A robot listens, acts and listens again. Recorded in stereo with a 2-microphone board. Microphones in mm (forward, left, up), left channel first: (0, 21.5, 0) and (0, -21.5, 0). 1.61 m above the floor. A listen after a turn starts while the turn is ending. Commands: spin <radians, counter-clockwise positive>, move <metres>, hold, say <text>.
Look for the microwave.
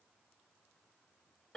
hold
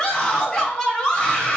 hold
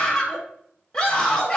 say I can't make out a microwave to turn to.